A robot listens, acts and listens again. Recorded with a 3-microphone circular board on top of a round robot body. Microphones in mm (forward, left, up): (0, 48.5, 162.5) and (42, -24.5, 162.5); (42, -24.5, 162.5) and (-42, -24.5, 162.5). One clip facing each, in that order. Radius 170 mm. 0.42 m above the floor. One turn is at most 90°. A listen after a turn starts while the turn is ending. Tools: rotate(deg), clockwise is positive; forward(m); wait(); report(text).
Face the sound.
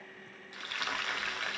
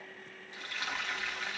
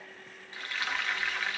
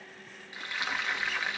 rotate(-90)
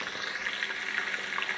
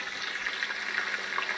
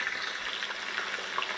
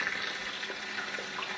rotate(-15)
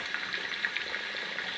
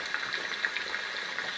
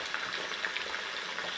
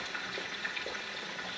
report("Found it: frying, straight ahead, 2 to 4 m away.")